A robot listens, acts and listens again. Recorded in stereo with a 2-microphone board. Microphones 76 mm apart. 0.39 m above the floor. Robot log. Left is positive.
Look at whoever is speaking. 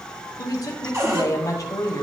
note: The woman speaking: about 50° left or 130° left.
cmd yaw +50
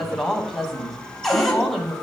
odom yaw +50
end: Found it: a woman speaking, straight ahead, 2 to 4 m away.